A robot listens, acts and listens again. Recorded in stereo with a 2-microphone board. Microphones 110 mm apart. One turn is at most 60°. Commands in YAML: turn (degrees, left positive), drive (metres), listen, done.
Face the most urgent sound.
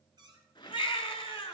turn: 50
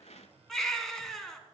done: "Found it: a baby crying, straight ahead, 1 to 2 m away."